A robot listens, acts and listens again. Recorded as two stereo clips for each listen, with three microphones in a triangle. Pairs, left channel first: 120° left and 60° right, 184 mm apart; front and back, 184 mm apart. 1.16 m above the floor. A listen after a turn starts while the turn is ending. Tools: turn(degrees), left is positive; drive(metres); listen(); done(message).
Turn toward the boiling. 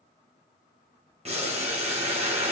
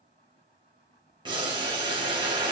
turn(degrees=-115)
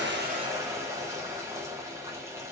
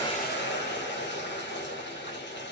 turn(degrees=15)
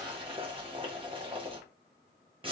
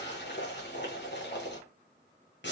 done("Facing the boiling, 1 to 2 m away.")